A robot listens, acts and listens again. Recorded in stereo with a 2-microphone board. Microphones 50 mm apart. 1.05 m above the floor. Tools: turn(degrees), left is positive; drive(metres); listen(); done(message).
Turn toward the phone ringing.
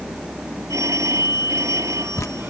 turn(degrees=-90)
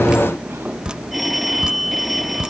done("Found it: a phone ringing, straight ahead.")